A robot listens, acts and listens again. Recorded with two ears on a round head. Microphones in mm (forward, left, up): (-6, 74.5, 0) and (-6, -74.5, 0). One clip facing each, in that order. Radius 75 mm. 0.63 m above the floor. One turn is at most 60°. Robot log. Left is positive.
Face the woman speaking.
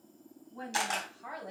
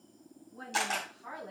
note: The woman speaking: about 60° left or 120° left.
cmd yaw +60
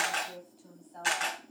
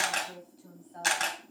end: Facing the woman speaking, over 4 m away.